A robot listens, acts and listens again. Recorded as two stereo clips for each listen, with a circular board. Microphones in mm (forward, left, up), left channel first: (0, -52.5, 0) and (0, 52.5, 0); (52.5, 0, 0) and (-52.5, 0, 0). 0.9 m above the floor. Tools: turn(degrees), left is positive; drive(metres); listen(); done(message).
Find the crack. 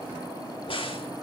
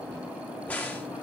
turn(degrees=-75)
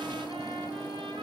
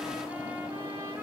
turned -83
turn(degrees=10)
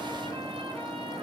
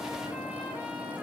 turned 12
done("I heard a crack from this way, but can't make it out now.")